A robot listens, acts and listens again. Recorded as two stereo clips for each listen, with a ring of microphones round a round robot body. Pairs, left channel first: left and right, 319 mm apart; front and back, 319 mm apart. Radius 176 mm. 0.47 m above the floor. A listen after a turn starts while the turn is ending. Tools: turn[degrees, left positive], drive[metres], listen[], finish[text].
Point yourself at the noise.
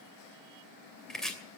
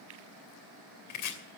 Action: finish[Found it: chopping, straight ahead, 2 to 4 m away.]